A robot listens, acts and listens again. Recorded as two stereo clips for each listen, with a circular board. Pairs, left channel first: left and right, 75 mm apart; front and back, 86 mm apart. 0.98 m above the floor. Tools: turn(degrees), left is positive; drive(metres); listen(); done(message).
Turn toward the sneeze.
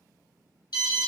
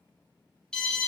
listen()
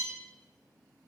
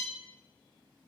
listen()
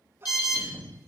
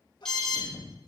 turn(degrees=-30)
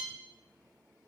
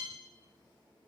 done("I heard a sneeze from this way, but can't make it out now.")